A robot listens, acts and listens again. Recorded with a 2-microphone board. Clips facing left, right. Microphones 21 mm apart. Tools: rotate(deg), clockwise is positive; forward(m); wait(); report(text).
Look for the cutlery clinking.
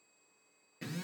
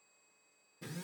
wait()
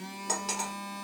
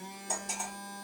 rotate(-90)
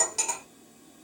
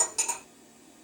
rotate(-15)
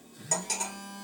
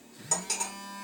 report("Facing the cutlery clinking.")